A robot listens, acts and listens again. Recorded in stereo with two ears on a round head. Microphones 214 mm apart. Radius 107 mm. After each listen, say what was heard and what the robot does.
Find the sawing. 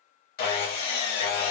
The sawing: about 40° left or 140° left. Turn 40° left.
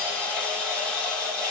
Found it: sawing, straight ahead, 1 to 2 m away.